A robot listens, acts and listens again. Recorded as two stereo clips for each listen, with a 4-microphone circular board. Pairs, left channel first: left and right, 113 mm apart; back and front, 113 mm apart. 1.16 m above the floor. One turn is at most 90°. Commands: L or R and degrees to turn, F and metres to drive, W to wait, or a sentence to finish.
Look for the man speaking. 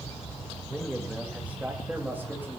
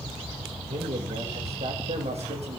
R15
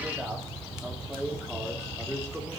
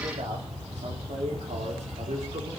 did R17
R10
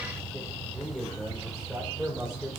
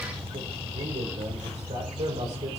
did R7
Found it: a man speaking, straight ahead, over 4 m away.